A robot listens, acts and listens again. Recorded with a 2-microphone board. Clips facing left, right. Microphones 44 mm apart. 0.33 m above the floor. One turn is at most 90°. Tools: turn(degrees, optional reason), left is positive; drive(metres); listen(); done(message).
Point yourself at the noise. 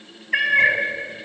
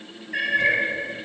turn(degrees=75, reason="The cat meowing: about 75° left or 105° left.")
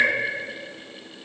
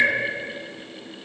done("Found it: a cat meowing, straight ahead.")